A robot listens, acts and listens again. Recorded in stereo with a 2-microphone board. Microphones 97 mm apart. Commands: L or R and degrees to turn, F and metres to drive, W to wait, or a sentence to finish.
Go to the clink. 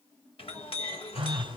L75
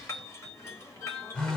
L30
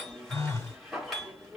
F1.0
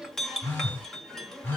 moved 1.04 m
F1.0
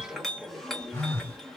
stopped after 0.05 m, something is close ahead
Arrived at the clink, straight ahead.